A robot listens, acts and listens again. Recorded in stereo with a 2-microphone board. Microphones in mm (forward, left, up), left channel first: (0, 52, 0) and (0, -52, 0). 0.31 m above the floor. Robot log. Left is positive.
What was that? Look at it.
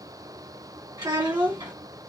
note: The child speaking: about 35° right or 145° right.
cmd yaw -35
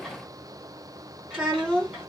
end: Facing the child speaking.